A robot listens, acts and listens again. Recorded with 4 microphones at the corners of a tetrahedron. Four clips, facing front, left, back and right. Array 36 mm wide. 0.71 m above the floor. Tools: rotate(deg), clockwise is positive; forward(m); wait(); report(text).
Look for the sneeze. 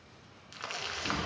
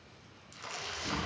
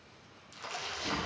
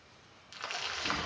rotate(135)
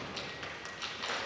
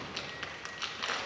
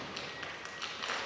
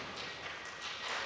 report("I heard a sneeze from this way, but can't make it out now.")